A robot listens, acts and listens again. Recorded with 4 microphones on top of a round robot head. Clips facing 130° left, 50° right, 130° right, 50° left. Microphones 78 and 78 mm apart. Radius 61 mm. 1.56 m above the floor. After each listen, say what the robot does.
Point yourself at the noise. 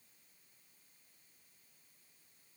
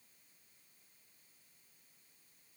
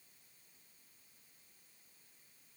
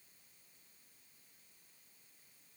Keep listening.
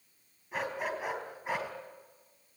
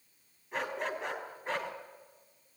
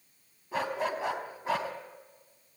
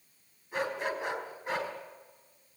Turn 150° right.
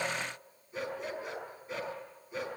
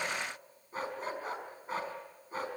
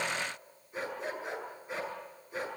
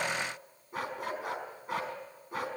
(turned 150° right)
Facing the dog barking, over 4 m away.